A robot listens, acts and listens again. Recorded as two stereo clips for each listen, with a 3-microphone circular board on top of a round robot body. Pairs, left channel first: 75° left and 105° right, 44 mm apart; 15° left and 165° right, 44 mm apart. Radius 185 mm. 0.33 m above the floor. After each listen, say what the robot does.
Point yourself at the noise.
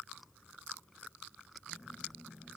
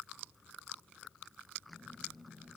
Turn 45° left.
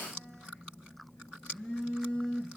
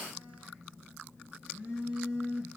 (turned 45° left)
Found it: a phone buzzing, straight ahead.